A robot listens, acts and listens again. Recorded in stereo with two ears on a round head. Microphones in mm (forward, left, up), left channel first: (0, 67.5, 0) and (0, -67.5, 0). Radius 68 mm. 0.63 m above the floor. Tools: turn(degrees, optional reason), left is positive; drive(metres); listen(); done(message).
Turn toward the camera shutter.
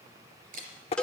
turn(degrees=-55, reason="The camera shutter: about 55° right or 125° right.")
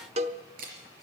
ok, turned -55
turn(degrees=-65, reason="So it is at 65° right.")
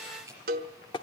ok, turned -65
turn(degrees=-20, reason="The camera shutter is now 20° right.")
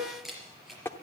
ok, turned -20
done("Found it: a camera shutter, straight ahead, 2 to 4 m away.")